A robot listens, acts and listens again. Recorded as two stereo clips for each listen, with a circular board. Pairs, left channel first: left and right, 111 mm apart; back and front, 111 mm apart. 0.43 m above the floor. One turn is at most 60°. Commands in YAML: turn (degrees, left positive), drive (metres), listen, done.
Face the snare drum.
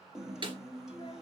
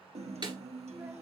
turn: -45
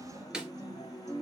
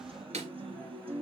done: "Facing the snare drum."